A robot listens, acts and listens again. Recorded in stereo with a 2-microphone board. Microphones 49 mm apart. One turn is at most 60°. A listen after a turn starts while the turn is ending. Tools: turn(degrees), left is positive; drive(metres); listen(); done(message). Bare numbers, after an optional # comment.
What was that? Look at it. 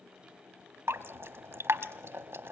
# The dripping: about 60° right or 120° right.
turn(-60)
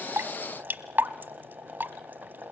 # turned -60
# So it is at 50° right.
turn(-50)
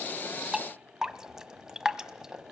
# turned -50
# The dripping is now 15° right.
turn(-15)
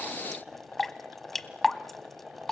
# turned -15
done("Found it: dripping, straight ahead, 1 to 2 m away.")